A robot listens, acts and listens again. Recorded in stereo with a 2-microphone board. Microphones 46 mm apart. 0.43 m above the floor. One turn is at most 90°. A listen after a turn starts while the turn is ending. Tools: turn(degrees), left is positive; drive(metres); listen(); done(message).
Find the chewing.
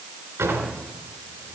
listen()
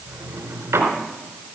listen()
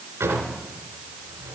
done("I can't make out chewing, only a drawer.")